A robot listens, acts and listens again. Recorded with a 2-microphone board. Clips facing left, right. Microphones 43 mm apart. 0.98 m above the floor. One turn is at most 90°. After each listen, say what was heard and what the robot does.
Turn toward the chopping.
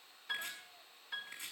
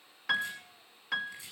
The chopping: about 35° left or 145° left. Turn 35° left.
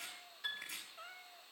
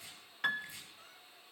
So it is at 105° left. Turn 90° left.
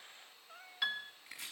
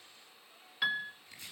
The chopping is now 65° left. Turn 65° left.
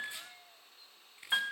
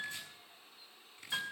The chopping is now 20° left. Turn 20° left.
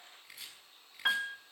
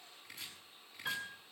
Found it: chopping, straight ahead.